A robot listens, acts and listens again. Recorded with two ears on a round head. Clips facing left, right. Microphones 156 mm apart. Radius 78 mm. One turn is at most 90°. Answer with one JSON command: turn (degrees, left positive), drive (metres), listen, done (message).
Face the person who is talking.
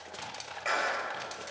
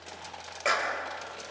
{"listen": true}
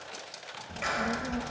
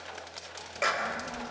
{"turn": 50}
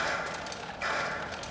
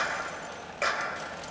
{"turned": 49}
{"done": "Found it: a child speaking, straight ahead, 1 to 2 m away."}